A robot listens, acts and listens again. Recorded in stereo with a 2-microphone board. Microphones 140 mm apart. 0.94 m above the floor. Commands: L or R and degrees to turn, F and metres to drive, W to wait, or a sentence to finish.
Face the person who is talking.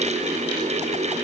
W
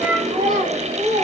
R90
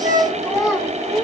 Facing the child speaking.